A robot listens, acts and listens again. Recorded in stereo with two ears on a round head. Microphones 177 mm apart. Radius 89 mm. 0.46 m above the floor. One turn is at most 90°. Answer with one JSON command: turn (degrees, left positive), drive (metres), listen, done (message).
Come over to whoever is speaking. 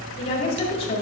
{"turn": 30}
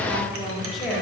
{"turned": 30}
{"drive": 1.0}
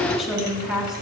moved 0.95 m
{"drive": 1.0}
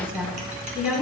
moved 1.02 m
{"drive": 1.0}
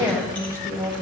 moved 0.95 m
{"turn": -20}
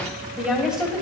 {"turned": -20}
{"drive": 1.0}
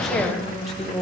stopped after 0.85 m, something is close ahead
{"done": "Arrived at the woman speaking, straight ahead."}